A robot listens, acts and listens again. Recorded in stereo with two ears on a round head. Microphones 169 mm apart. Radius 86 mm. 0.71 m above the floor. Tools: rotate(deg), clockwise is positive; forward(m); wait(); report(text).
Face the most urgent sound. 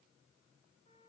wait()
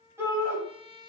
rotate(30)
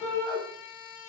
rotate(-15)
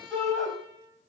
report("Found it: a shout, straight ahead.")